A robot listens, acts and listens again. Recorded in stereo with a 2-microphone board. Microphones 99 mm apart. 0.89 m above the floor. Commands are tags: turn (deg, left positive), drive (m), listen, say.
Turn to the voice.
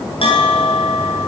<listen/>
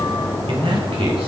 <turn deg="-90"/>
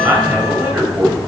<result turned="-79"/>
<turn deg="-20"/>
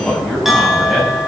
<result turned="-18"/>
<say>Found it: a man speaking, straight ahead.</say>